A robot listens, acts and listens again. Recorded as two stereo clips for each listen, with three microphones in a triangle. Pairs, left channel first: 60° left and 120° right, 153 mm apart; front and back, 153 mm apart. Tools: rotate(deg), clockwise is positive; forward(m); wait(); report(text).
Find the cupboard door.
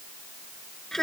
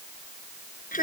wait()
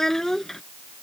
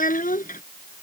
wait()
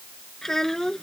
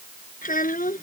report("I can't make out a cupboard door to turn to.")